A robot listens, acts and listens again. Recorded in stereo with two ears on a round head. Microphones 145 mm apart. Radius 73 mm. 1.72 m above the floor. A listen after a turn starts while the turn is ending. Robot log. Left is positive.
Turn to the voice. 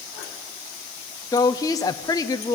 note: The woman speaking: about 20° left or 160° left.
cmd yaw +20
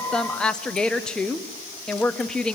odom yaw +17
end: Found it: a woman speaking, straight ahead, 1 to 2 m away.